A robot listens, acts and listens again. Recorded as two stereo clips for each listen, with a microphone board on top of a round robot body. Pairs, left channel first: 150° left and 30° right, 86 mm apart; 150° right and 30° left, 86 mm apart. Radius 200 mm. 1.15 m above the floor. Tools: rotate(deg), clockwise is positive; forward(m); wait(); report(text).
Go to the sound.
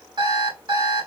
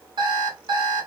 forward(1.0)
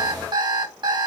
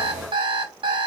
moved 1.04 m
forward(1.0)
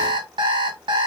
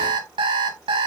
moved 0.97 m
forward(1.0)
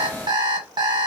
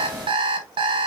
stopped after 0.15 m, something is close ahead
rotate(-10)
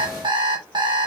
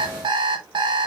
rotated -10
report("Arrived at the alarm clock, straight ahead.")